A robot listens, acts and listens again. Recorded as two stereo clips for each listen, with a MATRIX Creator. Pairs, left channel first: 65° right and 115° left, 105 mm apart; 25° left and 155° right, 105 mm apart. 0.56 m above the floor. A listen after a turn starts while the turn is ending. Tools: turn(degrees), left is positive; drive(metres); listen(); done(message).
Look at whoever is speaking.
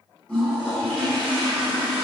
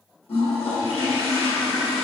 listen()
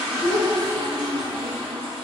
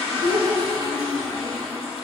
turn(degrees=55)
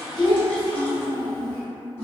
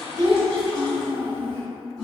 turn(degrees=-15)
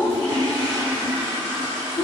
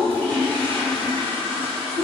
done("Facing the child speaking.")